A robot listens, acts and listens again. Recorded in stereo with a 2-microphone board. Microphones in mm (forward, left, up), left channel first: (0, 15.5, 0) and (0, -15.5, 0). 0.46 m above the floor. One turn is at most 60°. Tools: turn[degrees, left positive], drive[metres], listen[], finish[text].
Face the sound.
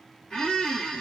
Thought: The squeak: about 20° left or 160° left.
Action: turn[20]
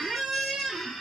Action: finish[Found it: a squeak, straight ahead.]